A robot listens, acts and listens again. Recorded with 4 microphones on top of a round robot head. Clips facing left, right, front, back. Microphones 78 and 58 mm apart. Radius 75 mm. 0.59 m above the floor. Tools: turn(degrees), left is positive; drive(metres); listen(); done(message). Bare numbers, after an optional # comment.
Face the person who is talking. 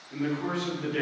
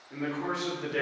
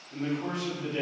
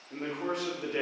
# The man speaking: 160° right.
turn(-160)
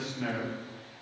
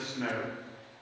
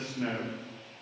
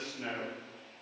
# The man speaking is now 50° right.
turn(-50)
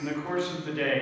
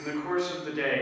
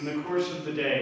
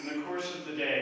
# The man speaking is now 15° right.
turn(-15)
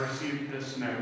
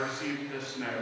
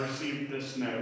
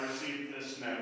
done("Facing the man speaking, 1 to 2 m away.")